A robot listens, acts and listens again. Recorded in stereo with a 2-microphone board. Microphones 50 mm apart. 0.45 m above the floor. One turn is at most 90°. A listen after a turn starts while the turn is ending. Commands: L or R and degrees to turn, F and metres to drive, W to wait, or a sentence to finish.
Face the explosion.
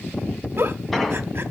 L30
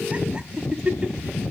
W
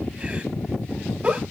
I heard an explosion, but can't make it out now. It was about 30° right or 150° left.